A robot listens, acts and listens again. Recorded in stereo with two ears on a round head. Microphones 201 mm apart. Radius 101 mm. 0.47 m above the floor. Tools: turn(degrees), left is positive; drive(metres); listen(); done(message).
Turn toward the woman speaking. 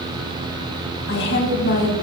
turn(degrees=55)
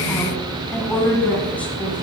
done("Found it: a woman speaking, straight ahead, over 4 m away.")